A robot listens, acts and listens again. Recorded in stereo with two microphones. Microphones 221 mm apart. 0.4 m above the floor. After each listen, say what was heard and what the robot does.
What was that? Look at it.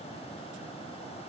Keep listening.
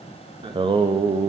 The singing: about 20° right or 160° right. Turn 20° right.
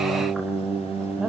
Turn 30° right.
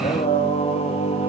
So it is at 30° left. Turn 30° left.
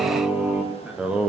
Found it: singing, straight ahead.